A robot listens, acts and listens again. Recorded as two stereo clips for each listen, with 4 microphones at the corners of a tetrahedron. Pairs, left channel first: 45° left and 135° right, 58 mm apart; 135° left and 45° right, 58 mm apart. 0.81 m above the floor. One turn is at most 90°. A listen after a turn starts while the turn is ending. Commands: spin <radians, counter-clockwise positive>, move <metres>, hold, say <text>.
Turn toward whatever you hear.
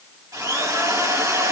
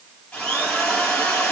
spin -1.57
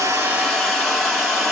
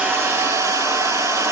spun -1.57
spin -0.87
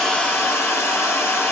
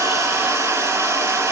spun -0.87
say Facing the drill, over 4 m away.